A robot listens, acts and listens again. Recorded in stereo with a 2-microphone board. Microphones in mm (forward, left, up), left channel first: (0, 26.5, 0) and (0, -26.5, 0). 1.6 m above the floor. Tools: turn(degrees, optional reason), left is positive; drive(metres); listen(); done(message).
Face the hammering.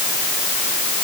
listen()
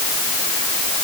listen()
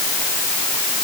done("I can't make out hammering to turn to.")